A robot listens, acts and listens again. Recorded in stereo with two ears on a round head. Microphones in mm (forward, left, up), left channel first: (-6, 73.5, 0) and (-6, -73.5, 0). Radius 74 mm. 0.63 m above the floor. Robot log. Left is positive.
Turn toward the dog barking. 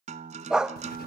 cmd yaw -30
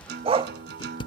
note: So it is at 145° right.
cmd yaw -145
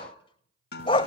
note: The dog barking is now 30° left.
cmd yaw +30
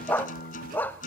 note: The dog barking is now 10° left.
cmd yaw +10
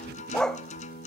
end: Facing the dog barking.